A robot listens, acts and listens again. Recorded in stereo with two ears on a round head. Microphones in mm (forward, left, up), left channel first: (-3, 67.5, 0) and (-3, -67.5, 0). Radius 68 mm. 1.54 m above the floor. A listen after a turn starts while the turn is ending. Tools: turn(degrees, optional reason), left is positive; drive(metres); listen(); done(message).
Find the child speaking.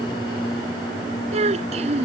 turn(degrees=-45, reason="The child speaking: about 45° right or 135° right.")
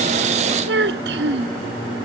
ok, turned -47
turn(degrees=-90, reason="So it is at 90° right.")
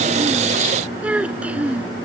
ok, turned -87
turn(degrees=-10, reason="The child speaking is now 10° right.")
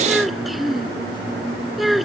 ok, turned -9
done("Found it: a child speaking, straight ahead.")